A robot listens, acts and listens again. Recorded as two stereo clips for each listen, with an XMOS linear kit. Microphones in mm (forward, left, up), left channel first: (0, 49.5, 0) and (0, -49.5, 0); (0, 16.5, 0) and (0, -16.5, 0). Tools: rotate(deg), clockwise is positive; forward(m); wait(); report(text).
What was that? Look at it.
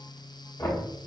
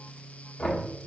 rotate(-35)
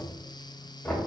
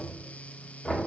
report("Found it: knocking, straight ahead, 1 to 2 m away.")